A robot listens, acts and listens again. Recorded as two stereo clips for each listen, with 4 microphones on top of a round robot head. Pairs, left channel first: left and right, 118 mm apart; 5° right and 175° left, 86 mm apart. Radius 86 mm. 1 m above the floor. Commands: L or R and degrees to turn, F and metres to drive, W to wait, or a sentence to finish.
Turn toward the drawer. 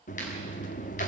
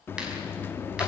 W
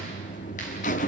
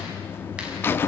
W
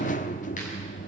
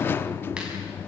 I can't make out a drawer to turn to.